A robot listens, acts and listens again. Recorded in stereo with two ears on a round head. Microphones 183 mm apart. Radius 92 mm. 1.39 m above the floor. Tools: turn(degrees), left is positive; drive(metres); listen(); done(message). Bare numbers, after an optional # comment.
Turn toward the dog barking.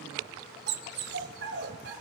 # The dog barking: about 55° right or 125° right.
turn(-55)
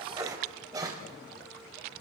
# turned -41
# So it is at 15° right.
turn(-15)
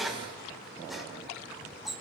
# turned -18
done("Found it: a dog barking, straight ahead, over 4 m away.")